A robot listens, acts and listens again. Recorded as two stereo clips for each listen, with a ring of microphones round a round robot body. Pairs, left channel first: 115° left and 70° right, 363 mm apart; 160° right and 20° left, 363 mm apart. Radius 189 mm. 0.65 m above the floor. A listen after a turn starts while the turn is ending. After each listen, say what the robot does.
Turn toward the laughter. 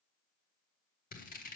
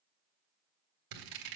Keep listening.
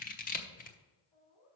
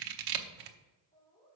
Turn 135° left.
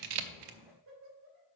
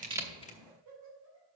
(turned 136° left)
Turn 20° right.
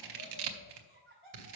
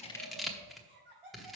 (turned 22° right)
Facing the laughter.